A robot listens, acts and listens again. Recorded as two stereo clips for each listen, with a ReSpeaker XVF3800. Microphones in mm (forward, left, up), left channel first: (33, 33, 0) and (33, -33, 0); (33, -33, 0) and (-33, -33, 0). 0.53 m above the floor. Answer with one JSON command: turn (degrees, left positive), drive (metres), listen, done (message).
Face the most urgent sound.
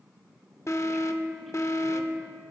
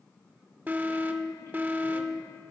{"turn": 120}
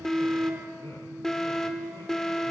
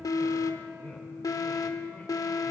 {"turn": 10}
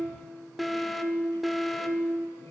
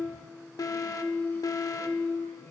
{"done": "Facing the alarm."}